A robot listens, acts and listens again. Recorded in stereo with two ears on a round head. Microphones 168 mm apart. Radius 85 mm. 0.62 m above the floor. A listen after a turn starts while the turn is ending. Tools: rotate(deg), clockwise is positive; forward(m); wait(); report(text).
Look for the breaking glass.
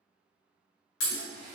rotate(-90)
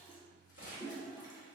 report("I heard breaking glass from this way, but can't make it out now.")